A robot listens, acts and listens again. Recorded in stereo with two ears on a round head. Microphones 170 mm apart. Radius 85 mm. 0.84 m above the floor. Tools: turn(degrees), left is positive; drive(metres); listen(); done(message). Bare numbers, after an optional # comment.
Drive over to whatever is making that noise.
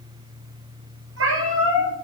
turn(-90)
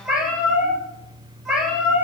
drive(1.0)
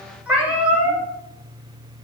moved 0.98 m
drive(1.0)
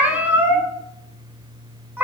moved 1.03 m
# The cat meowing is now 10° right.
turn(-10)
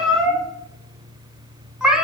drive(1.0)
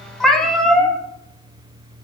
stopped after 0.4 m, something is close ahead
done("I am next to the cat meowing.")